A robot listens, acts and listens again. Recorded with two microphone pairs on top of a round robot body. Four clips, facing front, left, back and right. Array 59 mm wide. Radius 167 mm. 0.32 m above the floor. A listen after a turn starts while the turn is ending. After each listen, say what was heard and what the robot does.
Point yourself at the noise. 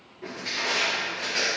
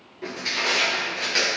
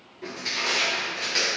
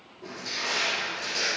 The crushing: 95° left. Turn 95° left.
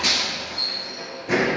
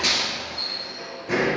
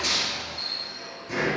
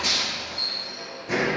The crushing is now 20° left. Turn 20° left.
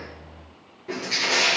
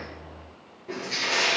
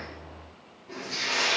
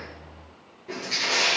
Facing the crushing.